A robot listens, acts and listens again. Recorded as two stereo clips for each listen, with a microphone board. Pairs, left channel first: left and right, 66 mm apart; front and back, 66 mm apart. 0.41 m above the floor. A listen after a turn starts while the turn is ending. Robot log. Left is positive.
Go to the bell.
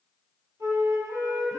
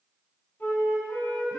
cmd idle
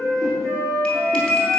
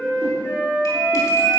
note: The bell: 15° left.
cmd yaw +15
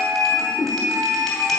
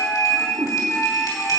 cmd fwd 1.0
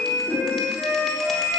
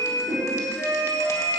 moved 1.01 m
note: The bell is now 10° left.
cmd yaw +10
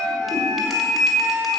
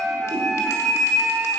cmd fwd 1.0
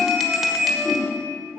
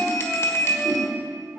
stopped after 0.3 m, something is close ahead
end: I am next to the bell.